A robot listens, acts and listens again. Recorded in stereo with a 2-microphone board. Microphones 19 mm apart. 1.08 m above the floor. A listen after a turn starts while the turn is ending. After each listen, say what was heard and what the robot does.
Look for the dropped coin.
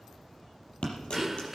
The dropped coin: about 70° left or 110° left. Turn 70° left.
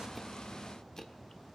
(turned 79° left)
Keep listening.
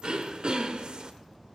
I heard a dropped coin, but can't make it out now. It was about 5° right or 30° left.